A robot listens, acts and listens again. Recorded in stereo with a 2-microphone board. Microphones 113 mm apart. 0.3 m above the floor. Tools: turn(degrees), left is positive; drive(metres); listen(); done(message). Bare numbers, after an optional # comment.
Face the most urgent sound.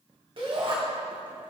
# The shout: about 50° right or 130° right.
turn(-50)
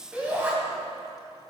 # So it is at 15° right.
turn(-15)
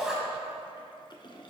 done("Facing the shout, 1 to 2 m away.")